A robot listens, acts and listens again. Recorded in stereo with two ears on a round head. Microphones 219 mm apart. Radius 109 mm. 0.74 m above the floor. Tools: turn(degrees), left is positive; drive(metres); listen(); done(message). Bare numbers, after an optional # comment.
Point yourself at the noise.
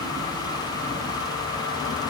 listen()
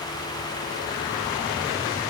listen()
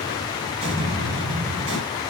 # The explosion: about 25° right or 155° right.
turn(-25)
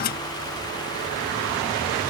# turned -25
listen()
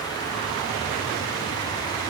done("I heard an explosion, but can't make it out now. It was about straight ahead or 130° right.")